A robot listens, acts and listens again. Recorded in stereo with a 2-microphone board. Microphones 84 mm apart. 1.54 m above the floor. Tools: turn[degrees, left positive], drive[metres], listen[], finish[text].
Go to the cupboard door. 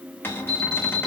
Thought: The cupboard door: about 25° left or 155° left.
Action: turn[25]
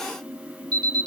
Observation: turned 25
Action: listen[]
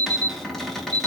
Action: drive[1.0]
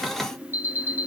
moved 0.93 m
Action: drive[1.0]
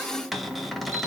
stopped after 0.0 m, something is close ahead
Action: finish[I am next to the cupboard door.]